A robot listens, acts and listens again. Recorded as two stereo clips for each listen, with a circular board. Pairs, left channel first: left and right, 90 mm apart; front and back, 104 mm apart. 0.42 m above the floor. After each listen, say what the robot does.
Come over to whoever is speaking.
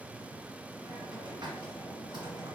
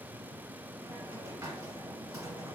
Keep listening.
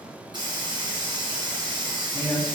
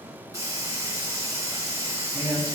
Turn 80° right.
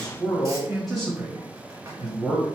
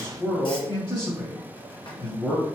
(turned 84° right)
Drive 1.0 m forward.
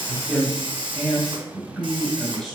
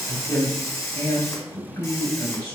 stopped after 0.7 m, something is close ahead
I am next to the man speaking.